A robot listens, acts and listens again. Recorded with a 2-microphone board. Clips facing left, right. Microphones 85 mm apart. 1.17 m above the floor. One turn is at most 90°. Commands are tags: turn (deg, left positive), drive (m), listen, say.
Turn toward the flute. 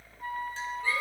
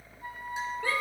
<turn deg="65"/>
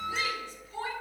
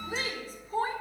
<listen/>
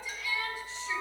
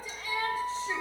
<turn deg="50"/>
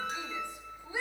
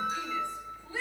<turn deg="-10"/>
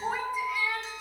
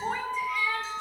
<say>Facing the flute.</say>